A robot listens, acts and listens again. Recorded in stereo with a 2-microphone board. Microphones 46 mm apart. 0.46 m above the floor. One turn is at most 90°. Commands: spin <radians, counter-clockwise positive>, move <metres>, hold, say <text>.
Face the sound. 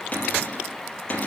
spin 0.52
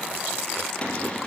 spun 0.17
spin 0.35
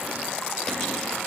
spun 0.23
hold
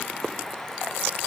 hold
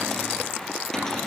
say Found it: a cupboard door, straight ahead.